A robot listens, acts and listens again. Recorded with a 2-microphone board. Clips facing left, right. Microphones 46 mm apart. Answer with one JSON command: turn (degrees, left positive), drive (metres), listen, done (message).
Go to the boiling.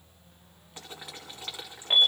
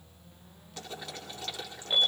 {"turn": 20}
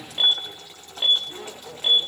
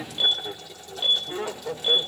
{"turn": 140}
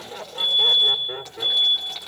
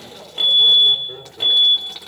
{"drive": 1.0}
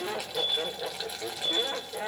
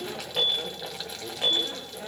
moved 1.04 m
{"drive": 1.0}
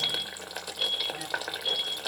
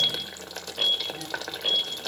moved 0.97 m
{"turn": 10}
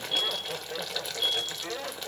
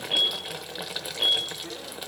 {"drive": 1.0}
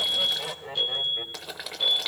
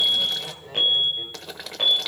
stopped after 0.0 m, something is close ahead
{"done": "Arrived at the boiling, straight ahead."}